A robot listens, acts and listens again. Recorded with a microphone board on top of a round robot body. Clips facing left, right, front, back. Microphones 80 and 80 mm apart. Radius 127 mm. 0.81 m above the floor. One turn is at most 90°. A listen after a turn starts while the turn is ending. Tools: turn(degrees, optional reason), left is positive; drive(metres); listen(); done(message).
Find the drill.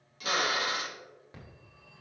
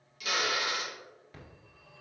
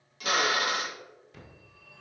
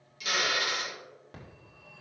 turn(degrees=40, reason="The drill: 40° left.")
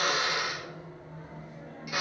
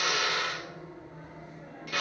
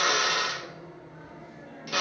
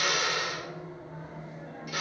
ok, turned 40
turn(degrees=15, reason="The drill is now 15° left.")
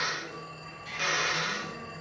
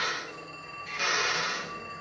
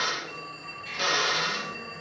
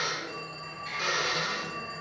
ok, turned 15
done("Facing the drill.")